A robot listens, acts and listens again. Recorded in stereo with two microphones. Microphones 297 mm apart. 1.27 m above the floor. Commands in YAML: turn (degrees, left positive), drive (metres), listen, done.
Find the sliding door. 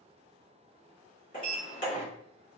turn: 25
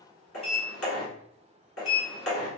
turn: 125
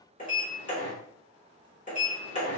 turn: 30
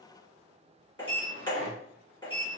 turn: 20
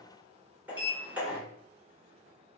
done: "Facing the sliding door."